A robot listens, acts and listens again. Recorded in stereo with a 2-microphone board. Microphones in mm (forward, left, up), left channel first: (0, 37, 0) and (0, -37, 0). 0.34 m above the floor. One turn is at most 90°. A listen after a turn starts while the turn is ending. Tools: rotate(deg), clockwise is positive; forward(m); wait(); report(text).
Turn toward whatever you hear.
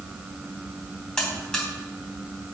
rotate(-30)
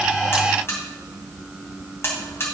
rotate(-90)
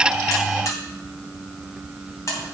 rotate(-55)
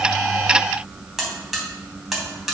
report("Found it: a buzzer, straight ahead, 2 to 4 m away.")